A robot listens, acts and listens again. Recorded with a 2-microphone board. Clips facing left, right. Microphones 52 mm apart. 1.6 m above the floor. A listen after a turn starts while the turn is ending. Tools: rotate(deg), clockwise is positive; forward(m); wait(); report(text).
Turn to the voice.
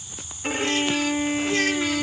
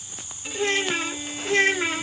rotate(25)
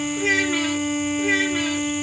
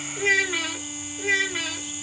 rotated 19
report("Facing the child speaking.")